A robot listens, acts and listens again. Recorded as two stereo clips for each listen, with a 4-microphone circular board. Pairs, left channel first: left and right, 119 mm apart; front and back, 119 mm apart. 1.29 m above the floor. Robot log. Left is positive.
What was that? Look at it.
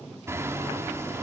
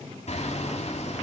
note: The hammering: 25° right.
cmd yaw -25
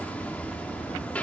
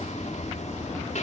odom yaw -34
note: The hammering is now 10° left.
cmd yaw +10
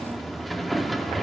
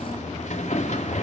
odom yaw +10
end: Facing the hammering, 2 to 4 m away.